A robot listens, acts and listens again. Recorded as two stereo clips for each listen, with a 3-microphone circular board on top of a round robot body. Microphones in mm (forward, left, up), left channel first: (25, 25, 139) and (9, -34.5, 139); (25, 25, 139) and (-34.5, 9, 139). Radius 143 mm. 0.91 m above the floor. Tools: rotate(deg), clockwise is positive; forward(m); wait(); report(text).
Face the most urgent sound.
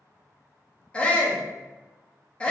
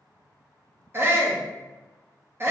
rotate(-150)
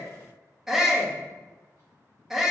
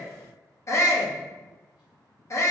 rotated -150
rotate(20)
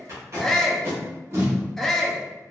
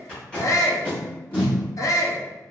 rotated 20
rotate(10)
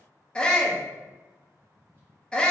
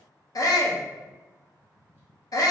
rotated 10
report("Facing the shout.")